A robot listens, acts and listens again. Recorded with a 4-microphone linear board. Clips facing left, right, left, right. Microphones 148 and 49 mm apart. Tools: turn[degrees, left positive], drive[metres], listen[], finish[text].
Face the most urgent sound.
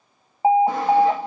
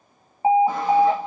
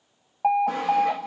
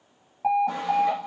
Thought: The alarm: about 30° left or 150° left.
Action: turn[30]
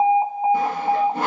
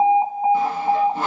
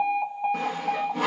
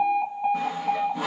Thought: So it is at 10° left.
Action: turn[10]
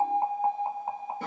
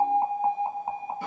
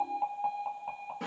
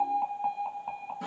Action: finish[Found it: an alarm, straight ahead.]